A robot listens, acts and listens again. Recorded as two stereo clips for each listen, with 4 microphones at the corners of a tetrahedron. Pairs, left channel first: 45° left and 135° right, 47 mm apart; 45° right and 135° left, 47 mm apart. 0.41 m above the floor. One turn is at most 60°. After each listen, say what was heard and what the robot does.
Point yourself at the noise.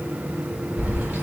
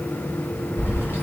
The keys jangling: 85° right. Turn 60° right.
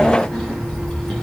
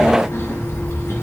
The keys jangling is now 40° right. Turn 40° right.
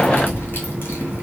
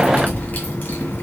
Found it: keys jangling, straight ahead.